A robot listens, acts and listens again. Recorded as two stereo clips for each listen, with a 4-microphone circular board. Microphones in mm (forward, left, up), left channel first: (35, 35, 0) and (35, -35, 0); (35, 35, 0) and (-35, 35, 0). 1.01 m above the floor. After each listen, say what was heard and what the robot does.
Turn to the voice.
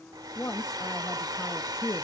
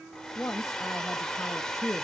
The woman speaking: 45° left. Turn 45° left.
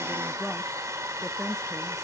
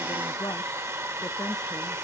Facing the woman speaking, 1 to 2 m away.